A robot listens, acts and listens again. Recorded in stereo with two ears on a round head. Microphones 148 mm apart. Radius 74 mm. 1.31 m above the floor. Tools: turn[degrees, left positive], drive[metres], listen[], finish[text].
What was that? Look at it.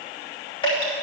Thought: The dripping: about 35° left or 145° left.
Action: turn[35]
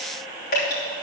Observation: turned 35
Thought: So it is at 110° left.
Action: turn[110]
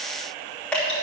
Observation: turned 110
Action: finish[Facing the dripping, 2 to 4 m away.]